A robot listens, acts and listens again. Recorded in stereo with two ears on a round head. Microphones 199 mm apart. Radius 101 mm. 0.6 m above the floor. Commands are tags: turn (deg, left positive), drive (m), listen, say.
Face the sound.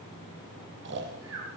<turn deg="-55"/>
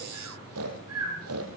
<turn deg="-70"/>
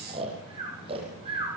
<turn deg="-25"/>
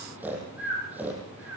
<say>Facing the snoring, over 4 m away.</say>